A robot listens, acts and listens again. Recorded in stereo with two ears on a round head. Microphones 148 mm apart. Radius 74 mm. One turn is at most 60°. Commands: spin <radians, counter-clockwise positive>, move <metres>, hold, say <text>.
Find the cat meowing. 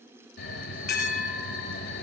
hold
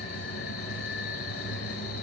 hold
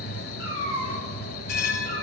spin -0.35
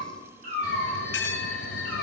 spin -1.05
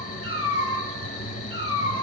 spin -1.05
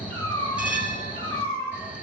spin -0.52
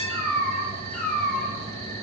say Found it: a cat meowing, straight ahead, over 4 m away.